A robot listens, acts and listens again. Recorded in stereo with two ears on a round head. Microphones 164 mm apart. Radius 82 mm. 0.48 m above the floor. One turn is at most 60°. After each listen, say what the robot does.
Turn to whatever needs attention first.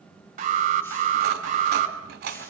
Turn 45° right.
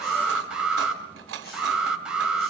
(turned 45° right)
Facing the alarm.